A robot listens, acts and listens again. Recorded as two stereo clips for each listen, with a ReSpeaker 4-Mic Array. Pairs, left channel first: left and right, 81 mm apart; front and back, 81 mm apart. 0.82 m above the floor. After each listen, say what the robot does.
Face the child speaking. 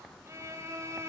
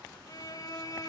Keep listening.
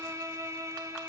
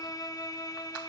Keep listening.
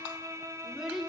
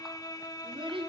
Turn 180° left.
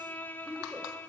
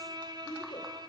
Turn 15° right.
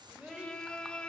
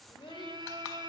Turn 15° right.
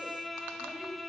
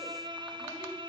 Keep listening.
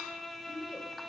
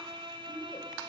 Found it: a child speaking, straight ahead, 2 to 4 m away.